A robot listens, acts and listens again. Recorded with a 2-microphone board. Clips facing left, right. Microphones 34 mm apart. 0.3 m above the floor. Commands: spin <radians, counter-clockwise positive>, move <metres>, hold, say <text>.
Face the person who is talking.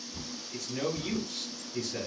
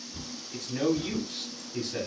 spin -0.52
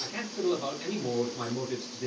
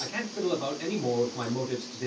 spin -1.92
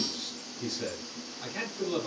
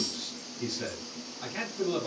say Facing the man speaking.